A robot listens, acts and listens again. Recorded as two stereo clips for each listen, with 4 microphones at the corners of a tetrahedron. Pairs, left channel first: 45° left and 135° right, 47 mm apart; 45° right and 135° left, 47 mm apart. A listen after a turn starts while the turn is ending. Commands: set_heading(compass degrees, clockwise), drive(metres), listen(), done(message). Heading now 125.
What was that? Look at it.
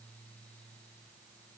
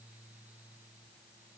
listen()
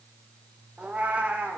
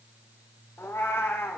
set_heading(200)
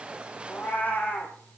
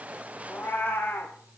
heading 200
done("Found it: a cat meowing, straight ahead, 2 to 4 m away.")